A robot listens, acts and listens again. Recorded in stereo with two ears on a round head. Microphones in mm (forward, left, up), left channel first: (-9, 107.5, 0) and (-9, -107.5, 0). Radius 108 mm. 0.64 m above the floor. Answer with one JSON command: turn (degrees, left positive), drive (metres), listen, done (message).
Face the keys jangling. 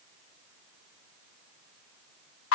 {"listen": true}
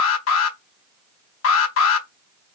{"listen": true}
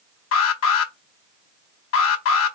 {"done": "I can't make out keys jangling to turn to."}